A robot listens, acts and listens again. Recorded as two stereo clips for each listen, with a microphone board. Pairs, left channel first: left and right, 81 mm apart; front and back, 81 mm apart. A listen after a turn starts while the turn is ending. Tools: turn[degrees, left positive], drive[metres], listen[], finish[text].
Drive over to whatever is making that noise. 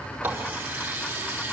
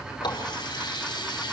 Thought: The running tap: 25° right.
Action: turn[-25]
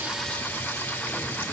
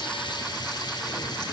Thought: The running tap is now 25° left.
Action: turn[25]
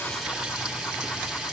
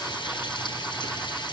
Thought: The running tap is now 10° right.
Action: turn[-10]
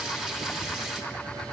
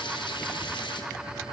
Action: listen[]
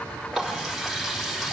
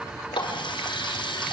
Action: drive[1.0]
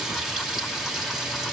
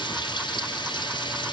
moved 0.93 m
Action: drive[1.0]
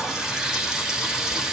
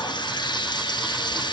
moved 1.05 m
Action: drive[1.0]
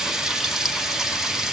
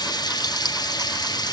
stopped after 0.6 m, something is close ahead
Action: finish[Arrived at the running tap, straight ahead.]